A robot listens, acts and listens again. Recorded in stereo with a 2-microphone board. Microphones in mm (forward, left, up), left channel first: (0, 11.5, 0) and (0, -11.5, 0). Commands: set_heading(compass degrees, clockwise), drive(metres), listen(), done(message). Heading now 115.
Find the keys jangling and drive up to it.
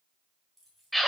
set_heading(85)
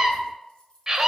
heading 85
set_heading(295)
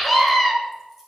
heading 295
listen()
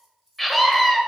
set_heading(305)
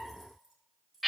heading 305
drive(1.0)
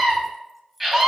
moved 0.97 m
drive(1.0)
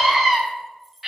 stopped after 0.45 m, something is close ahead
done("I am next to the keys jangling.")